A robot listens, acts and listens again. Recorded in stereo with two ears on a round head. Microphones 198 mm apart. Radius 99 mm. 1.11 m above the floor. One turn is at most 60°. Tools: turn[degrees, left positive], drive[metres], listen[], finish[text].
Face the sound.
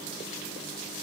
Action: listen[]
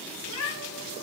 Thought: The cat meowing: about 70° left or 110° left.
Action: turn[60]
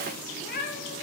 Thought: So it is at 45° left.
Action: turn[45]
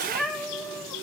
Action: finish[Found it: a cat meowing, straight ahead, over 4 m away.]